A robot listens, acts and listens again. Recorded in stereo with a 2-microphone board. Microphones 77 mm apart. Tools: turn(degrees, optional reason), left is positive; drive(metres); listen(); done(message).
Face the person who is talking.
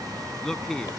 turn(degrees=30)
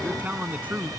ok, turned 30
turn(degrees=-20, reason="So it is at 20° right.")
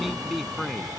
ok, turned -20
done("Found it: a man speaking, straight ahead.")